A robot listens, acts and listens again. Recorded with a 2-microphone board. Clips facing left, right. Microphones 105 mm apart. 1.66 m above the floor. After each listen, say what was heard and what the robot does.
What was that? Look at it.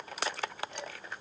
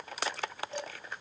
The dishes clattering: about 35° right or 145° right. Turn 35° right.
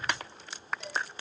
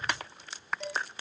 Facing the dishes clattering, 2 to 4 m away.